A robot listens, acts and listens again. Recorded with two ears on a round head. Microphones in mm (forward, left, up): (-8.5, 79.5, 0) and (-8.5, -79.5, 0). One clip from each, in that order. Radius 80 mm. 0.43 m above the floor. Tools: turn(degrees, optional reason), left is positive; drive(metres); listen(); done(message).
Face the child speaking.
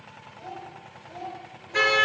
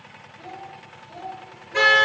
turn(degrees=55, reason="The child speaking: about 55° left or 125° left.")
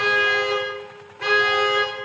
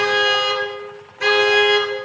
listen()
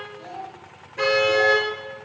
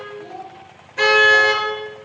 turn(degrees=55, reason="So it is at 55° left.")
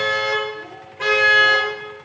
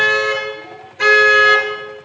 listen()
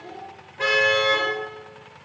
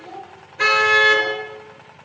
turn(degrees=-10, reason="The child speaking is now 10° right.")
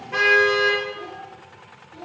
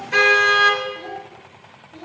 done("Found it: a child speaking, straight ahead, over 4 m away.")